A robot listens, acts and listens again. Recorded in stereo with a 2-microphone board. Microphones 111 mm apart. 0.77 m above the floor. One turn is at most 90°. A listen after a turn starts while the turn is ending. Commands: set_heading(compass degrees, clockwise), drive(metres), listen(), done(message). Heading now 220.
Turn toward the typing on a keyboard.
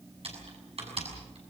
set_heading(285)
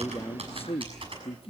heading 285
set_heading(335)
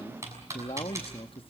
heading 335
set_heading(0)
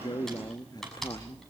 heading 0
done("Found it: typing on a keyboard, straight ahead, over 4 m away.")